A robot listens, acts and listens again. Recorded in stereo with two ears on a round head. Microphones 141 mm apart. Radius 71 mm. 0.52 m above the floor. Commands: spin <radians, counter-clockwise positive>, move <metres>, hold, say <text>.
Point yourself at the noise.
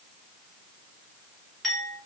spin 0.52
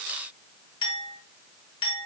spin 2.62
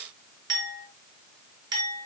spin -0.44
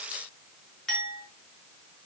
say Found it: a clink, straight ahead, over 4 m away.